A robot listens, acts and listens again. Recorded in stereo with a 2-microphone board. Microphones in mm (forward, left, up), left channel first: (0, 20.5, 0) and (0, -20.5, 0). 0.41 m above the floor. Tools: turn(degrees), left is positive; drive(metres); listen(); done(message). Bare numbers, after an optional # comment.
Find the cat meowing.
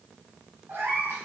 # The cat meowing: about 70° right or 110° right.
turn(-70)
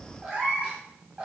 # So it is at 30° right.
turn(-30)
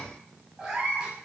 # The cat meowing is now 25° right.
turn(-25)
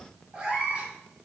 # The cat meowing is now 25° right.
turn(-25)
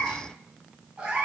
# The cat meowing is now 25° right.
turn(-25)
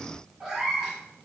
done("Found it: a cat meowing, straight ahead.")